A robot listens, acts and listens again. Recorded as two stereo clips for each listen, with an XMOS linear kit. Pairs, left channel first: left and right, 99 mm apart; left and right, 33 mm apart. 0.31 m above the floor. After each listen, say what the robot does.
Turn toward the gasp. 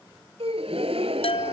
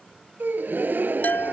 Turn 90° right.
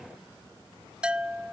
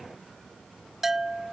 Facing where the gasp came from. I can't hear it now.